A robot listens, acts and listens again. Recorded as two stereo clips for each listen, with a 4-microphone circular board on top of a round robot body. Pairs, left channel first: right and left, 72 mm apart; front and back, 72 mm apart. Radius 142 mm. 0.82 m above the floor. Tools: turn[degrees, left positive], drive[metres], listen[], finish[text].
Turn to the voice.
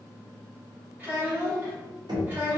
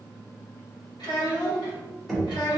Thought: The child speaking: 25° left.
Action: turn[25]
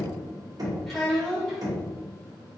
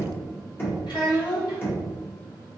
Action: finish[Found it: a child speaking, straight ahead.]